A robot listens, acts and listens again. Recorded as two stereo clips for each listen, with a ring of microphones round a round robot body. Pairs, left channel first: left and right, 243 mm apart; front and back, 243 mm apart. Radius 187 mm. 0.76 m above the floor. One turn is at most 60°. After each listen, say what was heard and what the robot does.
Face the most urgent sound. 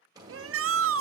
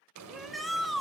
The shout: 90° right. Turn 60° right.
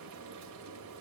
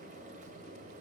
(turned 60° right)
Nothing new. It was at 30° right. Turn 30° right.
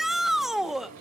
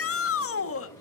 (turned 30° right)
Found it: a shout, straight ahead.